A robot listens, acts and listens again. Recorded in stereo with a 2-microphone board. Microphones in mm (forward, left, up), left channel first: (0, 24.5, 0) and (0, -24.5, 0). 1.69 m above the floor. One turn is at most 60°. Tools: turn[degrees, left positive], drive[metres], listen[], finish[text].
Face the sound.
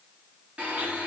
Thought: The blender: about 30° right or 150° right.
Action: turn[-30]
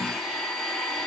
Action: finish[Found it: a blender, straight ahead.]